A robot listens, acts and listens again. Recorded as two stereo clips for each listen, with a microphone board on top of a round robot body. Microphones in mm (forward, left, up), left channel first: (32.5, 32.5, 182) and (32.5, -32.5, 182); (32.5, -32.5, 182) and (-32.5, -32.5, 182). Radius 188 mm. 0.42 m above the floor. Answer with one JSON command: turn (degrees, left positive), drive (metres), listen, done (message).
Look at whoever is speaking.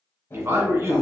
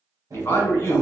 {"turn": -50}
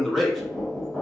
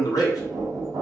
{"done": "Found it: a man speaking, straight ahead, 1 to 2 m away."}